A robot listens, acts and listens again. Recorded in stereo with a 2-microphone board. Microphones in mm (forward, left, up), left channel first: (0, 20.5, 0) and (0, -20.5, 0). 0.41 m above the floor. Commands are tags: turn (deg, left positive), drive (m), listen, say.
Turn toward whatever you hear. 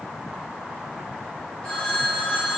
<turn deg="25"/>
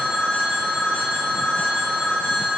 <turn deg="130"/>
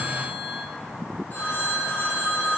<turn deg="50"/>
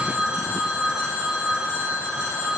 <turn deg="-25"/>
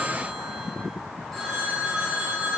<say>Facing the phone ringing.</say>